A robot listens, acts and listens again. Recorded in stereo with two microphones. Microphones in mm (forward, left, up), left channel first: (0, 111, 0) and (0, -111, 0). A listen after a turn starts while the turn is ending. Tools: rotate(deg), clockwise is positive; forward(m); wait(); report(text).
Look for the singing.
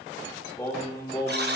rotate(-15)
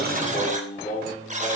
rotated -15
rotate(-40)
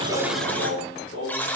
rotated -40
rotate(-100)
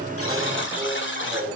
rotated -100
rotate(35)
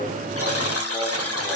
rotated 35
wait()
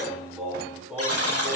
report("Facing the singing.")